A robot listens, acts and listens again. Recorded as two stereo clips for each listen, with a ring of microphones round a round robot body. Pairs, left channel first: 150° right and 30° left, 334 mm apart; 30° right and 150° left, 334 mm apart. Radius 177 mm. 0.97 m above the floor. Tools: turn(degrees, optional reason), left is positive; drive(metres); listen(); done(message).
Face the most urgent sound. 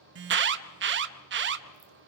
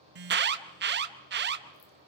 turn(degrees=90, reason="The alarm: 90° left.")
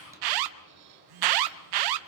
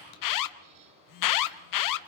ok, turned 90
done("Facing the alarm, under 1 m away.")